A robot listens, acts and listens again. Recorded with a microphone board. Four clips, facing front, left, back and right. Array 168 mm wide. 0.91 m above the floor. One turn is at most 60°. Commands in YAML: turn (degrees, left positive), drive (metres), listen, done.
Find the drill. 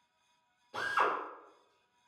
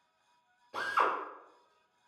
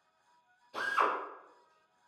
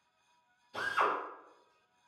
turn: 60
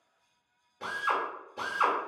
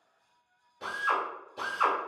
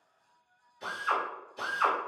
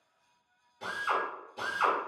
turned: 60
turn: 15
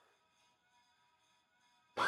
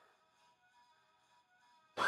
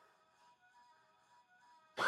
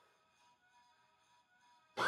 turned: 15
done: "Found it: a drill, straight ahead, 1 to 2 m away."